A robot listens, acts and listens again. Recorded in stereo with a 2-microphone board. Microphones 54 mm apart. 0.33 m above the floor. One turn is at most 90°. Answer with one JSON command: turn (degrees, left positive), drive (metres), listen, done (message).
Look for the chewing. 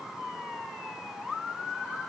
{"listen": true}
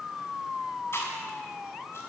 {"turn": 50}
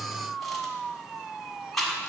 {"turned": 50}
{"done": "Facing the chewing, 1 to 2 m away."}